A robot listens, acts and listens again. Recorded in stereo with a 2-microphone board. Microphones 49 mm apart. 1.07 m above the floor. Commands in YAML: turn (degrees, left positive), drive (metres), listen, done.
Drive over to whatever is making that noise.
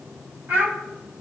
turn: -50
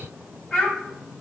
drive: 1.0
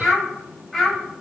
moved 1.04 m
drive: 1.0
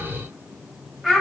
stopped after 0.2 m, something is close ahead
done: "I am next to the child speaking."